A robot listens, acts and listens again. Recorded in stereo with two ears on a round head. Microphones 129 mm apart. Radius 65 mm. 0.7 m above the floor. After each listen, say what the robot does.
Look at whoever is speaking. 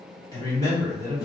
Turn 25° left.
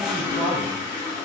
Turn 130° left.
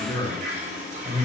Turn 10° left.
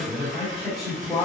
Found it: a man speaking, straight ahead, 1 to 2 m away.